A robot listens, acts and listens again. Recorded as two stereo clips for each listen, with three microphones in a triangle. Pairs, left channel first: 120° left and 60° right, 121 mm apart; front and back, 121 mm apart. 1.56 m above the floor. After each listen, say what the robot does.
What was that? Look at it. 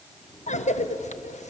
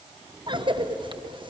Turn 135° left.
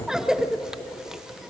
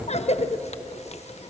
Turn 25° left.
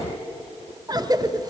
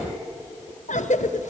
Found it: a cough, straight ahead, 1 to 2 m away.